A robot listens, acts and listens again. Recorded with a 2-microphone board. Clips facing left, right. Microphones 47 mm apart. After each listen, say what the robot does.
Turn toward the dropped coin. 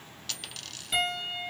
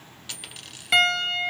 Turn 15° right.
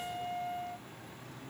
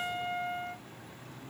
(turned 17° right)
Keep listening.
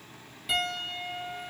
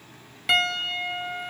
I heard a dropped coin, but can't make it out now. It was about straight ahead or 145° right.